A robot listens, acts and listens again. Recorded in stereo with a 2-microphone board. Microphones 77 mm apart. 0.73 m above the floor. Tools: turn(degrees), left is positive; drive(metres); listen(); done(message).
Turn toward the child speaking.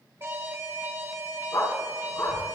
turn(degrees=-70)
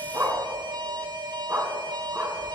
turn(degrees=-35)
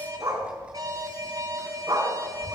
turn(degrees=-10)
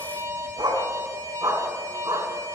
listen()
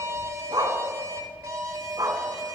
done("Facing the child speaking, over 4 m away.")